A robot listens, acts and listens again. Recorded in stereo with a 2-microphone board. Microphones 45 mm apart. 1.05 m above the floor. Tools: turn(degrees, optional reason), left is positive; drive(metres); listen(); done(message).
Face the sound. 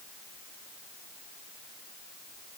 listen()
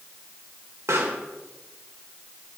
turn(degrees=-90)
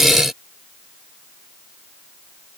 done("Facing where the pop came from. I can't hear it now.")